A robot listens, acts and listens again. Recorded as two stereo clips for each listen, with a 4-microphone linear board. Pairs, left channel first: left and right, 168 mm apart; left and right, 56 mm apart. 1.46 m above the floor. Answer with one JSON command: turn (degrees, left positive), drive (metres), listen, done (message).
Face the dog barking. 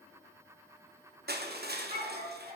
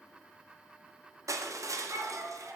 {"turn": -45}
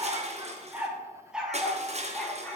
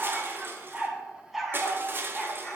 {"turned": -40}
{"turn": 10}
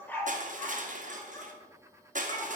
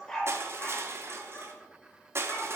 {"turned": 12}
{"turn": 25}
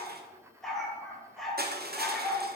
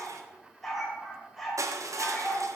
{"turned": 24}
{"done": "Found it: a dog barking, straight ahead, 2 to 4 m away."}